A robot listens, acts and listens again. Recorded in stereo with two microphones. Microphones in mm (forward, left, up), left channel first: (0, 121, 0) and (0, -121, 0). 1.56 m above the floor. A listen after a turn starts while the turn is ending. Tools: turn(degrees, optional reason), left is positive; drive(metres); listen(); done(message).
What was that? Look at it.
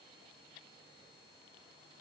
listen()
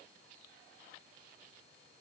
listen()
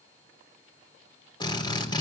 turn(degrees=20, reason="The drill: about 20° left or 160° left.")
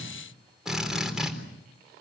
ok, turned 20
done("Facing the drill, over 4 m away.")